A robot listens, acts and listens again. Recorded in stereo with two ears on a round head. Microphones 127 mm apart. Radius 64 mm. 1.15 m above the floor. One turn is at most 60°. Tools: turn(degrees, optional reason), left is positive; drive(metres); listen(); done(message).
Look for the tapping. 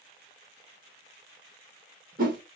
listen()
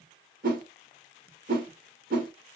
listen()
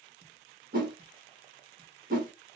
done("I can't make out tapping, only a whoosh.")